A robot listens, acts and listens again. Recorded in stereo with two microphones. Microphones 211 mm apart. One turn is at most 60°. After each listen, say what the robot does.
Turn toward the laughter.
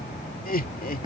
Turn 45° left.
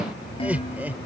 Turn 10° right.
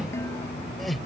Facing the laughter.